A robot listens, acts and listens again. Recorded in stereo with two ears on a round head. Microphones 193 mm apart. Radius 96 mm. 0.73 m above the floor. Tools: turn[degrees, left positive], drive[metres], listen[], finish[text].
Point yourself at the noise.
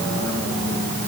Action: listen[]
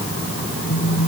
Thought: The phone buzzing: about 70° left or 110° left.
Action: turn[70]
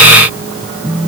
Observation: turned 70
Action: finish[Facing the phone buzzing.]